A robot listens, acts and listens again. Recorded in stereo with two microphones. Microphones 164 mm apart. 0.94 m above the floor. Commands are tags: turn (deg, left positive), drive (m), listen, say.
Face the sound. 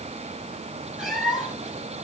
<turn deg="30"/>
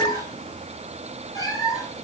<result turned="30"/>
<turn deg="160"/>
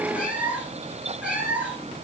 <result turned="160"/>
<say>Found it: a cat meowing, straight ahead, over 4 m away.</say>